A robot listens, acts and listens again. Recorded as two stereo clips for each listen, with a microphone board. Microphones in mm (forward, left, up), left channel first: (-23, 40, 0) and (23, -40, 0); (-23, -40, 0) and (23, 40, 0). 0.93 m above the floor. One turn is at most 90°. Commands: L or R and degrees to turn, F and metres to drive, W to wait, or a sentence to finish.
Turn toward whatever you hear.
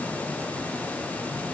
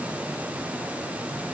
W
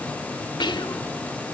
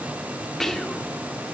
L90
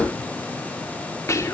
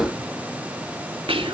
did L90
L60
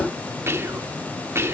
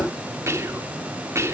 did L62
Found it: whispering, straight ahead, 1 to 2 m away.